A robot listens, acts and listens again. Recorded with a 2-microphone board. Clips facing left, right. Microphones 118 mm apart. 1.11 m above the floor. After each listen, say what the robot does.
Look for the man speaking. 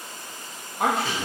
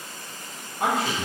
Turn 90° left.
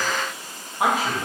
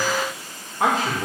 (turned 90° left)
Turn 15° left.
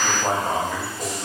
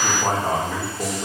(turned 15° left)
Facing the man speaking.